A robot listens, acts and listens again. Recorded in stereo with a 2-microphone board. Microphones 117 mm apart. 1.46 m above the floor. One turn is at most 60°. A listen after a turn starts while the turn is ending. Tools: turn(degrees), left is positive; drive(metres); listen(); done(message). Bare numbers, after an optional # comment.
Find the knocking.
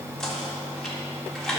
turn(30)
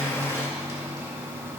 listen()
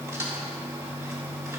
# So it is at 25° right.
turn(-25)
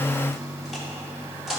done("Found it: knocking, straight ahead.")